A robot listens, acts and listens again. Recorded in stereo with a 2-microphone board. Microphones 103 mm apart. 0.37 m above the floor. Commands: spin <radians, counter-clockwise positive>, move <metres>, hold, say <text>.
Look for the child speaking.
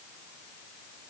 hold
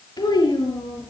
spin 0.70
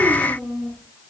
say Facing the child speaking.